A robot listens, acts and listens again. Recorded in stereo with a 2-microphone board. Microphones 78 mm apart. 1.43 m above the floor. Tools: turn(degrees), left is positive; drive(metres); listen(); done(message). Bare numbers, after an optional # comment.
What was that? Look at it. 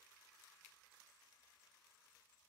listen()
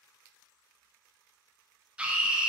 turn(-30)
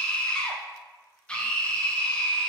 # So it is at 15° left.
turn(15)
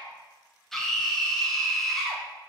done("Facing the scream, 1 to 2 m away.")